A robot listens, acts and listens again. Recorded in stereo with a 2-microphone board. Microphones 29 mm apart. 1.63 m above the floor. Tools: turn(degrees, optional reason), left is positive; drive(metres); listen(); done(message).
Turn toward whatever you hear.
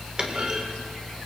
turn(degrees=-30, reason="The clunk: about 30° right or 150° right.")
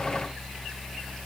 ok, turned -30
listen()
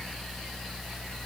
done("I heard a clunk, but can't make it out now. It was about straight ahead or 120° right.")